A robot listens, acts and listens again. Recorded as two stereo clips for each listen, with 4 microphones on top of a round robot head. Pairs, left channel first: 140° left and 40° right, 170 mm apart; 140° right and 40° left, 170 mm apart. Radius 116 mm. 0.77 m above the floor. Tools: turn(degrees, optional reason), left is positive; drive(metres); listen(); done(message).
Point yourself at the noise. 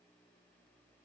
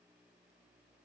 listen()
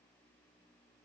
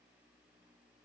listen()
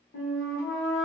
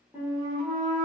turn(degrees=125, reason="The flute: 125° left.")
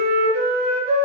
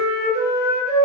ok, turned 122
done("Facing the flute, under 1 m away.")